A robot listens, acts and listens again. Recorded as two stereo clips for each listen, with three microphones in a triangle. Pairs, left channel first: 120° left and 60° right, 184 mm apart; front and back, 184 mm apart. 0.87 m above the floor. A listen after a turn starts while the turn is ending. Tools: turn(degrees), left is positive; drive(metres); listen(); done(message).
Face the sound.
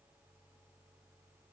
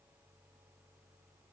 listen()
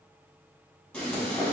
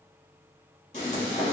turn(degrees=40)
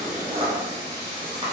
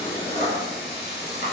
done("Facing the frying, 1 to 2 m away.")